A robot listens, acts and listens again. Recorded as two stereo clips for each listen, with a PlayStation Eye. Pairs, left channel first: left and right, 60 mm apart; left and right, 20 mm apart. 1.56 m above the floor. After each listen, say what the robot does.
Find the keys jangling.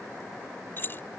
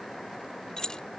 Turn 35° left.
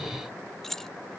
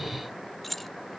Facing the keys jangling.